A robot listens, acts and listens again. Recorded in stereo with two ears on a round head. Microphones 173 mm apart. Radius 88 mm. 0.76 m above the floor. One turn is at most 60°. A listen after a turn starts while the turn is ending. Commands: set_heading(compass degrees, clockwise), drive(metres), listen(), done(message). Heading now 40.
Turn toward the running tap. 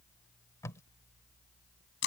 listen()
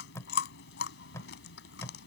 listen()
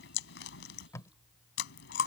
done("I can't make out a running tap, only chewing and tape being pulled.")